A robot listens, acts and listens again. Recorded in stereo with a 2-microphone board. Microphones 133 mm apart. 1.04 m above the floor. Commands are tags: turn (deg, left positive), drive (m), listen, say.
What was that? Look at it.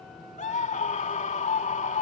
<turn deg="65"/>
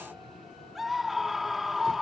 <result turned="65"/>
<say>Found it: a scream, straight ahead.</say>